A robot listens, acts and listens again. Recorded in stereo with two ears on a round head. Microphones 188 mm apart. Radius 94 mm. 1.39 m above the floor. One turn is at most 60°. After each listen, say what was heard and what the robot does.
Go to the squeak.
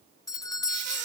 The squeak: about 55° right or 125° right. Turn 55° right.
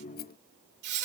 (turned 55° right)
So it is at 60° right. Turn 60° right.
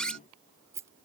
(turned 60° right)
Drive 1.0 m forward.
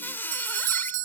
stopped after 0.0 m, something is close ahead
The squeak is now 10° left. Turn 10° left.
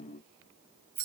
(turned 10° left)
Keep listening.
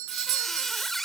Blocked. The squeak is further on, straight ahead.